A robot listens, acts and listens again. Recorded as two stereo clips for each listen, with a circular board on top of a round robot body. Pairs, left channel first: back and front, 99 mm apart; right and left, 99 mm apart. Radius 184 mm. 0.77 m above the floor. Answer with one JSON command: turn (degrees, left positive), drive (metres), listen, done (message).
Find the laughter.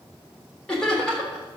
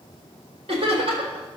{"turn": 100}
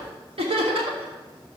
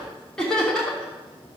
{"turn": -10}
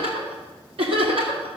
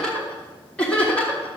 {"turn": -15}
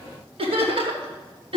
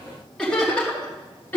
{"turn": -15}
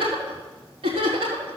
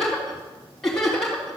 {"done": "Found it: laughter, straight ahead."}